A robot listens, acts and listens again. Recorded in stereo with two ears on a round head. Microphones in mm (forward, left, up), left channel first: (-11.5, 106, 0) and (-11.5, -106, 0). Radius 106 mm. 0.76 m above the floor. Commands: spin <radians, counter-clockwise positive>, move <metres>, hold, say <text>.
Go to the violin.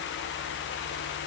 hold
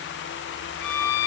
spin 1.57
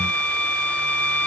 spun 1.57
move 1.0
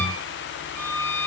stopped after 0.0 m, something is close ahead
spin 0.17
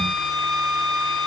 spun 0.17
say Blocked. The violin is further on, straight ahead.